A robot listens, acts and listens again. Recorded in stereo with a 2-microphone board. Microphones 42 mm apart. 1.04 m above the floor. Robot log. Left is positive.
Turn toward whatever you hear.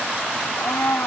cmd yaw +90
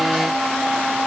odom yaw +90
end: Found it: a blender, straight ahead.